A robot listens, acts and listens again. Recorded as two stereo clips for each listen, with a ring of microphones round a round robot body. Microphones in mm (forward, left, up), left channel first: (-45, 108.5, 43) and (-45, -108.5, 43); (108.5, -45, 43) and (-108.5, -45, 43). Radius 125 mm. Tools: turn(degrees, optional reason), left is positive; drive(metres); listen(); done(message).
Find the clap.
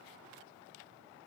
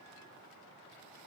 listen()
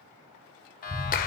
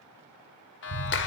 turn(degrees=35, reason="The clap: 35° left.")
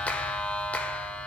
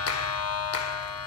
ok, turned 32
done("Found it: a clap, straight ahead.")